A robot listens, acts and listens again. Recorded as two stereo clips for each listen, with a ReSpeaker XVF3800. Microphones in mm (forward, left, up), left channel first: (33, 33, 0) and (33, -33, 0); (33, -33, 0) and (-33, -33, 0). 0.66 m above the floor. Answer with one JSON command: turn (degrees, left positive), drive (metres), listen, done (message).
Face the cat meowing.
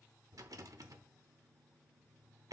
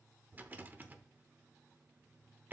{"listen": true}
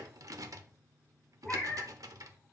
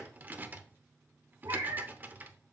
{"turn": 165}
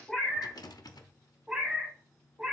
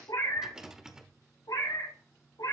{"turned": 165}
{"turn": -10}
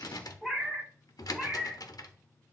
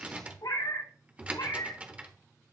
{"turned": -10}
{"done": "Found it: a cat meowing, straight ahead."}